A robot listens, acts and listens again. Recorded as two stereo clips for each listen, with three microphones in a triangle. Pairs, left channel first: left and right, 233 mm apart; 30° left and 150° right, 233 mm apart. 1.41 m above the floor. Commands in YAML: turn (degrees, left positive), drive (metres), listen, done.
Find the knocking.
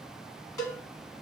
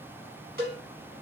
listen: true
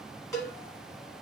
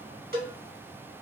listen: true
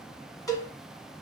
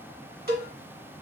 done: "I can't make out knocking to turn to."